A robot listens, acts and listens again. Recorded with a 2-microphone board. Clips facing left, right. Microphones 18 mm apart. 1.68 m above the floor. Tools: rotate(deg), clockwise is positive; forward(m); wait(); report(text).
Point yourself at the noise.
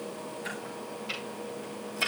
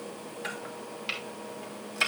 rotate(50)
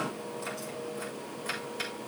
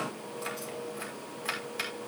rotate(85)
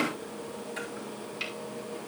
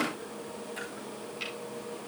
rotate(-10)
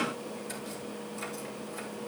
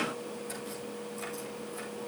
wait()
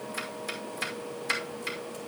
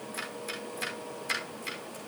report("Found it: chopping, straight ahead.")